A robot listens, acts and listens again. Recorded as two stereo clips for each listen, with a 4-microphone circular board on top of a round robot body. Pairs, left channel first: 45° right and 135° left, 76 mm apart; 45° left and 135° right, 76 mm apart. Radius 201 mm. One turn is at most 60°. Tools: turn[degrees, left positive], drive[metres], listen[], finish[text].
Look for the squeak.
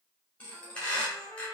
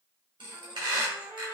Thought: The squeak: 120° right.
Action: turn[-60]
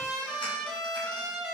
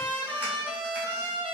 Thought: Nothing new. It was at 60° right.
Action: turn[-60]
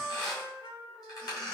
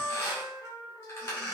Thought: The squeak is now 10° right.
Action: turn[-10]
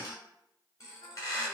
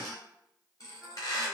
Action: finish[Found it: a squeak, straight ahead, 1 to 2 m away.]